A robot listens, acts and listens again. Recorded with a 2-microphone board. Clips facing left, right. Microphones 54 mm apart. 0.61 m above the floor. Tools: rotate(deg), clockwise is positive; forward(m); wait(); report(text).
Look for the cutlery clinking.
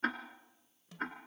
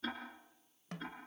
wait()
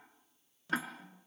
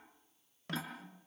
rotate(-15)
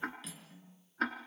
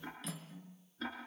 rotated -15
report("Facing the cutlery clinking, over 4 m away.")